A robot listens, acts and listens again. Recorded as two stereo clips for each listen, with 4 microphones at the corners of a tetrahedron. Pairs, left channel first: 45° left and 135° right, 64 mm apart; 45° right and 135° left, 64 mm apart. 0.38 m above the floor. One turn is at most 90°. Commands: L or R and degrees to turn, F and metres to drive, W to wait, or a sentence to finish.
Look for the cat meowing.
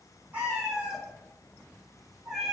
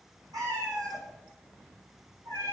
L90
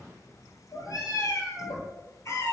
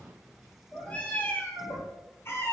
Facing the cat meowing.